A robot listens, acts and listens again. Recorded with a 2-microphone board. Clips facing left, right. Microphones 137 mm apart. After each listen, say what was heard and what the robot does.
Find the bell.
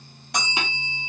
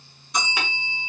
The bell: about 65° left or 115° left. Turn 65° left.
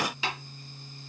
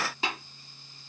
Keep listening.
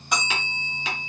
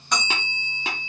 So it is at 10° left. Turn 10° left.
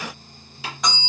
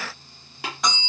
Facing the bell.